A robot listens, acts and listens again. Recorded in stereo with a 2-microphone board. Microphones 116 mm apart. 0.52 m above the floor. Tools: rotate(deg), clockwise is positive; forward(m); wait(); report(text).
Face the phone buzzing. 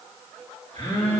rotate(-55)
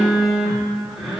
report("Facing the phone buzzing.")